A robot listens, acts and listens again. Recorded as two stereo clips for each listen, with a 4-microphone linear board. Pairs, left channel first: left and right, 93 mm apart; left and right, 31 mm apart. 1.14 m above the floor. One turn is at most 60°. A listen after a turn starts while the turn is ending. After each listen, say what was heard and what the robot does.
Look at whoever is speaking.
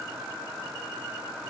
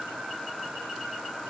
Keep listening.
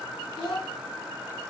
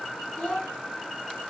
The child speaking: about 50° left or 130° left. Turn 50° left.
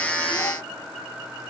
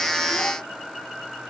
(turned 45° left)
Keep listening.
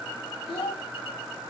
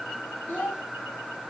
So it is at 85° left. Turn 60° left.
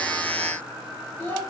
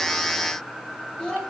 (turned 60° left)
The child speaking is now 25° left. Turn 25° left.
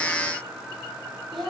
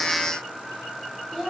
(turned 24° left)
Found it: a child speaking, straight ahead, over 4 m away.